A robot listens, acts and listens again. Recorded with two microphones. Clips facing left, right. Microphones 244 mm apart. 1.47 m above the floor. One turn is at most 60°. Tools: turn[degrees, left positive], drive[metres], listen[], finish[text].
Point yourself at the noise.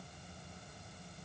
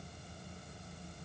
Action: listen[]
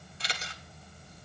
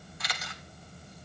Thought: The camera shutter: about 30° left or 150° left.
Action: turn[30]
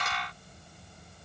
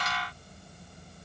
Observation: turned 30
Action: listen[]
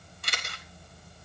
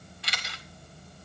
Thought: So it is at 120° left.
Action: turn[60]
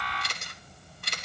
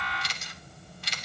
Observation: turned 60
Thought: The camera shutter is now 70° left.
Action: turn[60]
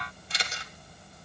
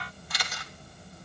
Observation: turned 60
Thought: The camera shutter is now 30° left.
Action: turn[30]
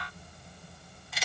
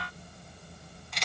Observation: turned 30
Action: finish[Facing the camera shutter, 1 to 2 m away.]